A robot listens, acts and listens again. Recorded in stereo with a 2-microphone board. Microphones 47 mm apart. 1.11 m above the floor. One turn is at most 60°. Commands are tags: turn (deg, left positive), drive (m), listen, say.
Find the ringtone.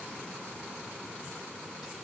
<listen/>
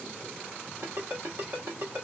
<turn deg="-55"/>
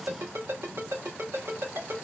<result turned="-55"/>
<turn deg="-60"/>
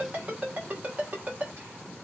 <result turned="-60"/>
<turn deg="-30"/>
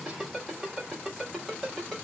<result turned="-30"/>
<say>Facing the ringtone, 2 to 4 m away.</say>